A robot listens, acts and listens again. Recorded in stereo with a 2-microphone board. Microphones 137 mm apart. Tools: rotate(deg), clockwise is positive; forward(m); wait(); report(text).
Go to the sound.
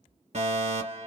rotate(60)
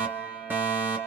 rotate(15)
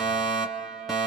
forward(1.0)
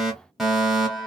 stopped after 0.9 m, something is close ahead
report("Arrived at the fire alarm, straight ahead.")